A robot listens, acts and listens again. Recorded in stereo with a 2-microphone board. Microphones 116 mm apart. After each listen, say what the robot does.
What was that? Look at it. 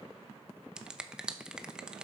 Turn 30° right.
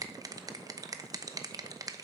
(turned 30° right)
Turn 145° right.
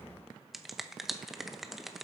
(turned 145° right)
Facing the finger snap, under 1 m away.